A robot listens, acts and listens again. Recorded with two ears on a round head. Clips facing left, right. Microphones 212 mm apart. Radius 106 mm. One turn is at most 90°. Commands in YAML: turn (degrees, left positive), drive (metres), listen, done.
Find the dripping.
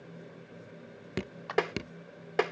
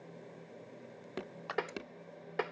turn: 35
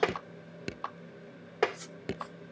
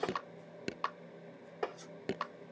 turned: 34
done: "Facing the dripping."